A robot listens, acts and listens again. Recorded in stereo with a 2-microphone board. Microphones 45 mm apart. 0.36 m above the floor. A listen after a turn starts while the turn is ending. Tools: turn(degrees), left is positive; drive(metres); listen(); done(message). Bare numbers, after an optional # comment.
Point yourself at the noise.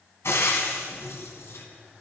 # The frying: about 75° left or 105° left.
turn(75)
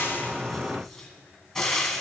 # So it is at 10° left.
turn(10)
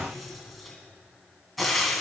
done("Found it: frying, straight ahead, 1 to 2 m away.")